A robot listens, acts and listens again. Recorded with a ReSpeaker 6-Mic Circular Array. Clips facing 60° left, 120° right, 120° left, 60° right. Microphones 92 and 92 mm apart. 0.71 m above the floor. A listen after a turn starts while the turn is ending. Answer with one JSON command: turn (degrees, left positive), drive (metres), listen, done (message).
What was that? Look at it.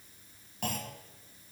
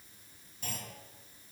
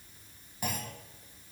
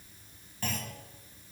{"turn": 45}
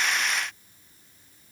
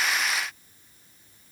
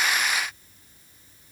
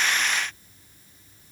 {"done": "I heard a clunk from this way, but can't make it out now."}